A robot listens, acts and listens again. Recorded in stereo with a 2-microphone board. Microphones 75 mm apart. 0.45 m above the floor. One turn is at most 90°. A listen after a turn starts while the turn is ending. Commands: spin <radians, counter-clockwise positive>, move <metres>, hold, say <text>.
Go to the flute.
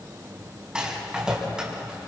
hold
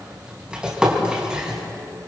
hold
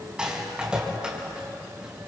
say I can't make out a flute, only a rattle.